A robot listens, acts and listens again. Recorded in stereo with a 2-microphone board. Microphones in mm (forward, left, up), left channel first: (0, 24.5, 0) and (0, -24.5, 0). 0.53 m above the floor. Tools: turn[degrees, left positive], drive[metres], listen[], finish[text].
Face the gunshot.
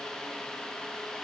Action: listen[]
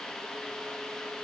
Action: listen[]
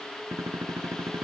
Action: turn[-90]
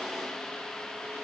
Action: finish[Facing where the gunshot came from. I can't hear it now.]